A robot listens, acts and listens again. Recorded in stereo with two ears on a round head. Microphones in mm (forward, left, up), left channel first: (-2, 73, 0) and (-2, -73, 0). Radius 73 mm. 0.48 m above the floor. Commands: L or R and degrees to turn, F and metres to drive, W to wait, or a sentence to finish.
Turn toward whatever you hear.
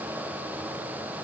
W
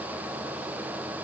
W
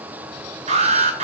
R40
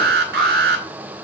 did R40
R95
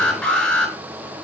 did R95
Facing the alarm, over 4 m away.